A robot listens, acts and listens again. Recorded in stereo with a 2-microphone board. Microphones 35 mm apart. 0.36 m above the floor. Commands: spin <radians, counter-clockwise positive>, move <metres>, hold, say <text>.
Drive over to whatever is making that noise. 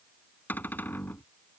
spin 1.13
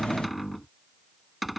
move 1.0
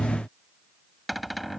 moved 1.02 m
move 1.0
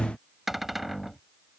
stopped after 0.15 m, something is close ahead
say Arrived at the cupboard door, straight ahead.